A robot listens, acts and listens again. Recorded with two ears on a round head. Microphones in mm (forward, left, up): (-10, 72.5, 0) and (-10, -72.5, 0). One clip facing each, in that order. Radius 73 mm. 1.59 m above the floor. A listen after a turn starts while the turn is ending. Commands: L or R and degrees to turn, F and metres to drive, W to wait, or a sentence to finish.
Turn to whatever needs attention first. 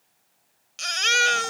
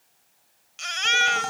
L50
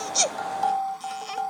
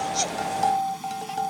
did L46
W
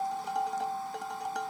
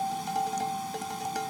W
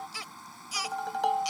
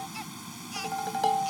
L85
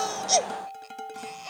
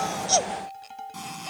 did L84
W
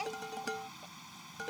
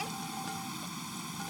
W
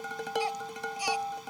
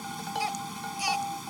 Facing where the baby crying came from. I can't hear it now.